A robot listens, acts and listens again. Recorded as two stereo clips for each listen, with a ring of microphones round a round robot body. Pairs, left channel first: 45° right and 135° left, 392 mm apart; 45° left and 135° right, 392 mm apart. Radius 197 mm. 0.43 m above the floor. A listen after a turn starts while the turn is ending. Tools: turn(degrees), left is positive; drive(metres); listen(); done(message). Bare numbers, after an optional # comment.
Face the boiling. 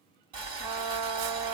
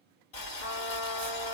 # The boiling: 65° left.
turn(65)
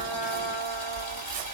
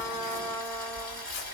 done("Found it: boiling, straight ahead, 2 to 4 m away.")